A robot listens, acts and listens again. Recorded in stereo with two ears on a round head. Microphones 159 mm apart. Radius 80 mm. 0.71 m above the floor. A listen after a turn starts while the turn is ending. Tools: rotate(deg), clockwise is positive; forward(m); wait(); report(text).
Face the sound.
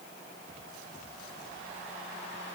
wait()
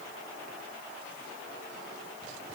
wait()
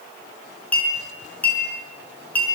rotate(-30)
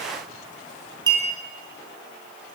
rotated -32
rotate(25)
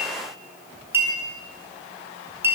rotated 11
rotate(15)
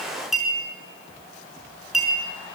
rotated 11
report("Found it: a clink, straight ahead.")